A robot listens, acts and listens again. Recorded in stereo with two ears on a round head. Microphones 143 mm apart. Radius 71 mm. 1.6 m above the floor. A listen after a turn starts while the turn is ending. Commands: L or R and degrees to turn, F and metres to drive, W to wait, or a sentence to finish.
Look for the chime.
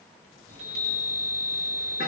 R65
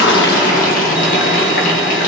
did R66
W
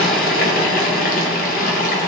W
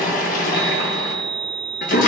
Found it: a chime, straight ahead, 2 to 4 m away.